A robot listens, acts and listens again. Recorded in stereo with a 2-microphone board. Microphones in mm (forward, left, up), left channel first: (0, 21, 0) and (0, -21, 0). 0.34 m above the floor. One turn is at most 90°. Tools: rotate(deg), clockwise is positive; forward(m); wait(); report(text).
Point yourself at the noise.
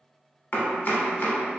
rotate(-50)
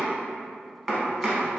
report("Found it: chopping, straight ahead, under 1 m away.")